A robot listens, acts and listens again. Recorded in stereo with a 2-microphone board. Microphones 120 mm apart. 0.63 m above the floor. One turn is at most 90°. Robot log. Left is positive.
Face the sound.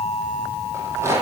note: The rattle: about 20° right or 160° right.
cmd yaw -20
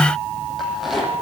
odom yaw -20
end: Facing the rattle, over 4 m away.